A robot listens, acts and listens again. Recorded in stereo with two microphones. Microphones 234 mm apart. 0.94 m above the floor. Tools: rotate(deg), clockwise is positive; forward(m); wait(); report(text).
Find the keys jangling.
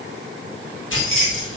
rotate(-65)
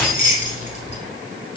rotate(-35)
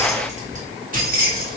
rotate(45)
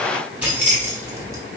rotate(10)
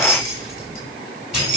report("Facing the keys jangling.")